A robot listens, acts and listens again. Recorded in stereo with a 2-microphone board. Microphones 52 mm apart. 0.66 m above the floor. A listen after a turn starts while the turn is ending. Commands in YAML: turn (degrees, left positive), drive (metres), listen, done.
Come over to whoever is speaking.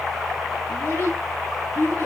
turn: 35
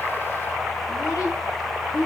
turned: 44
turn: 100
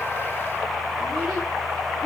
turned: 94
listen: true
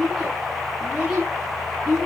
drive: 1.0
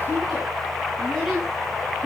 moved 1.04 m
drive: 1.0
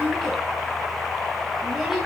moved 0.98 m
drive: 1.0
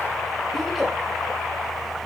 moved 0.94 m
listen: true
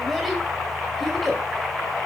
drive: 1.0
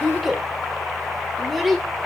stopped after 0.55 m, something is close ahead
done: "Arrived at the child speaking, straight ahead."